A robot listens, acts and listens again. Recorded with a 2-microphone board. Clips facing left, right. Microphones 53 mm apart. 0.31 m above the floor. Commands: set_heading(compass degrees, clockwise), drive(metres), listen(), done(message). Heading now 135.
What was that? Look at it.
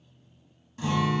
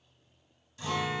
set_heading(95)
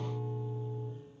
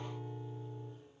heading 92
done("Found it: a guitar, straight ahead, under 1 m away.")